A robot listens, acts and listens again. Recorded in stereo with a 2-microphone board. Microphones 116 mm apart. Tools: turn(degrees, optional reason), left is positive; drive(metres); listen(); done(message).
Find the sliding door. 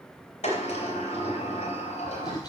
turn(degrees=90)
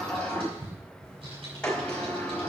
turn(degrees=10, reason="So it is at 10° left.")
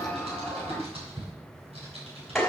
done("Found it: a sliding door, straight ahead, 2 to 4 m away.")